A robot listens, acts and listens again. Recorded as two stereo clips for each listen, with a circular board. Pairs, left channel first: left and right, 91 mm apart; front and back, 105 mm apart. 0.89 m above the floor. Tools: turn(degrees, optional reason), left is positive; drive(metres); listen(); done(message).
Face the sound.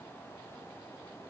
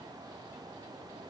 listen()
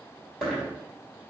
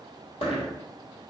done("Facing the dropped coin, 1 to 2 m away.")